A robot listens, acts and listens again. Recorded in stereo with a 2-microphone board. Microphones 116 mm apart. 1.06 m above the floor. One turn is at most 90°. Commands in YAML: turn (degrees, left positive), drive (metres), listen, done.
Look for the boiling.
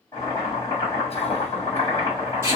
turn: 30
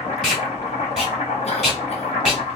turn: 90
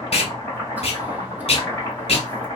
turn: 25
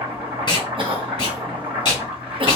turn: -15
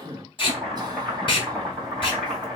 done: "Found it: boiling, straight ahead."